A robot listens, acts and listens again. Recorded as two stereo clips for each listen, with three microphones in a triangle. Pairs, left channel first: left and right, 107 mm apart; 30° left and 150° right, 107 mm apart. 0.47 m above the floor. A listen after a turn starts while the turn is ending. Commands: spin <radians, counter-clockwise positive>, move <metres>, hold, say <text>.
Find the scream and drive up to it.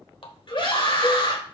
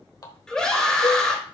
spin 1.92
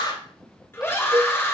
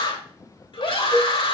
spin 0.52
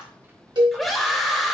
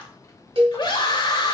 move 1.0
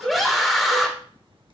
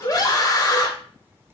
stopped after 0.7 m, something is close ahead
say Arrived at the scream, straight ahead.